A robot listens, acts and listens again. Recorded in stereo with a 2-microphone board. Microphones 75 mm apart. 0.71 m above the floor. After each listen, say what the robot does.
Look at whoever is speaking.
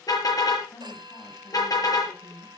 Turn 65° left.
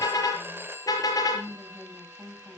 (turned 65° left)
Facing the woman speaking, over 4 m away.